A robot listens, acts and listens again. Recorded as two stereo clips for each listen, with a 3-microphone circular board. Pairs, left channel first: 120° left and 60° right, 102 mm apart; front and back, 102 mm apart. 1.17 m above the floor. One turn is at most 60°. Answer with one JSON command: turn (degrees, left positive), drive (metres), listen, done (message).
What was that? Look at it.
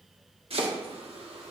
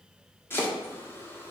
{"turn": -60}
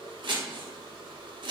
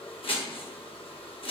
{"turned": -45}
{"turn": -25}
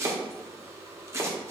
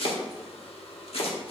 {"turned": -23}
{"done": "Found it: chopping, straight ahead."}